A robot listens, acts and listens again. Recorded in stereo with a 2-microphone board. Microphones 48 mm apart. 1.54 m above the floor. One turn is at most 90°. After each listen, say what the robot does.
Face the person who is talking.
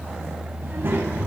Turn 50° right.
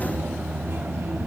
Turn 80° right.
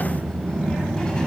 Turn 15° left.
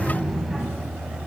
Facing the child speaking, over 4 m away.